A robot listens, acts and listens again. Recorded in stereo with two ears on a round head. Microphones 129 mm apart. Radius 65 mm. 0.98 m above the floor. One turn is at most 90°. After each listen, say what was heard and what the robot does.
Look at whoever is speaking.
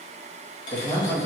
The man speaking: about 20° left or 160° left. Turn 20° left.
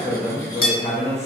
The man speaking: about 20° left or 160° left. Turn 20° left.
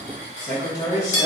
The man speaking: about 30° left or 150° left. Turn 30° left.
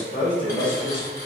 The man speaking: about 20° left or 160° left. Turn 20° left.
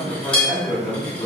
The man speaking: about 15° left or 165° left. Turn 15° left.
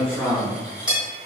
Found it: a man speaking, straight ahead.